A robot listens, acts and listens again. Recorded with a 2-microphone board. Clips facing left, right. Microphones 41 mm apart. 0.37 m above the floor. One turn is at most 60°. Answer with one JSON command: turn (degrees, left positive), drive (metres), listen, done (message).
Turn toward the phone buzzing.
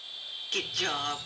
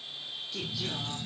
{"turn": -30}
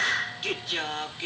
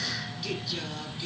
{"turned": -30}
{"turn": 20}
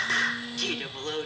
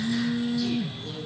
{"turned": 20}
{"done": "Facing the phone buzzing, 1 to 2 m away."}